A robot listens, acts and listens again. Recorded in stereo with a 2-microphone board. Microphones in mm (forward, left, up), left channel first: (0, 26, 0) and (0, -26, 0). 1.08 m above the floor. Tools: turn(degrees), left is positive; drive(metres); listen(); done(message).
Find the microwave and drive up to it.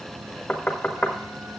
listen()
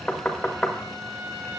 listen()
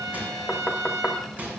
turn(degrees=-30)
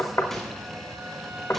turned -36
listen()
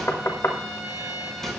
drive(metres=1.0)
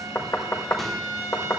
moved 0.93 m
listen()
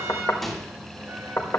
drive(metres=1.0)
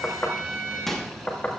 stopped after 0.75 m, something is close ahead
turn(degrees=10)
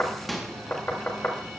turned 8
done("Arrived at the microwave, straight ahead.")